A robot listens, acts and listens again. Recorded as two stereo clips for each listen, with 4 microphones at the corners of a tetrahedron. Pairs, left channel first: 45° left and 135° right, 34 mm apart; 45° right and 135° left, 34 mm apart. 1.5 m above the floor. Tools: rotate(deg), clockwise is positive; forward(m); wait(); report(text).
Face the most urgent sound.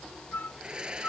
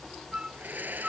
wait()
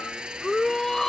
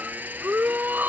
rotate(-125)
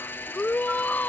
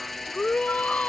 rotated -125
rotate(-10)
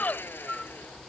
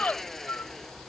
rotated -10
report("Found it: a shout, straight ahead.")